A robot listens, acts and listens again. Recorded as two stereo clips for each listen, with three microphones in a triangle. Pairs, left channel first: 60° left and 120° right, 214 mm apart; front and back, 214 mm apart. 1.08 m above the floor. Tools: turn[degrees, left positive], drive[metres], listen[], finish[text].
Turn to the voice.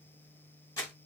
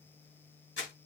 Action: listen[]
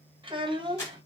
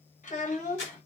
Thought: The child speaking: 50° right.
Action: turn[-50]
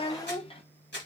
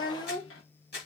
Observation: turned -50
Action: finish[Facing the child speaking.]